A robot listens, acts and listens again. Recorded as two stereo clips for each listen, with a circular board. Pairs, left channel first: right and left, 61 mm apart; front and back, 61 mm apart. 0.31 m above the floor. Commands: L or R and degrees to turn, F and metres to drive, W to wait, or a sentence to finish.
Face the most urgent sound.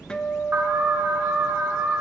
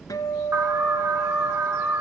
L145
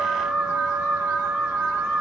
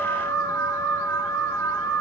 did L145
L20
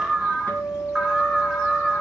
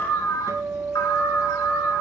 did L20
L10
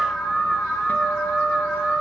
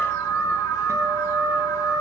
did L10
Found it: an alarm, straight ahead.